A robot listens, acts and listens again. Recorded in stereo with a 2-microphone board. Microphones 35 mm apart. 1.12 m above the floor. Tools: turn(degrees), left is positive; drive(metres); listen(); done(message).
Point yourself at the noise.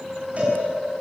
turn(degrees=-35)
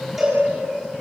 done("Facing the cowbell.")